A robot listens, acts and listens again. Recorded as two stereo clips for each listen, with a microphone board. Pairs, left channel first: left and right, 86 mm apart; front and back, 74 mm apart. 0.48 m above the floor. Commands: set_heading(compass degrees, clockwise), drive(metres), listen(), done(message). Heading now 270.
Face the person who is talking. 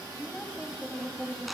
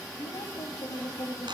done("Found it: a woman speaking, straight ahead.")